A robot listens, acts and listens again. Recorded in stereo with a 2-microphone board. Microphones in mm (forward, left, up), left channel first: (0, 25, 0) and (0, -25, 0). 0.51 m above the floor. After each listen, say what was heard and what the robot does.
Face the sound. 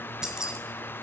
Turn 30° right.
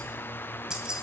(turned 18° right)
Turn 30° right.
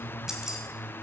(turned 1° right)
Turn 30° right.
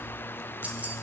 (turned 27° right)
So it is at 150° right. Turn 150° right.
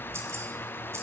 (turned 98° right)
The keys jangling is now 60° right. Turn 60° right.
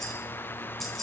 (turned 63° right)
Facing the keys jangling.